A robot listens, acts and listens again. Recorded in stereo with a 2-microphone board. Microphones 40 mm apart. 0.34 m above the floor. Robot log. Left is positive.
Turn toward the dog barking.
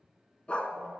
note: The dog barking: about 30° left or 150° left.
cmd yaw +30
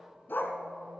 note: So it is at 120° left.
cmd yaw +120
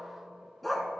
end: Found it: a dog barking, straight ahead, under 1 m away.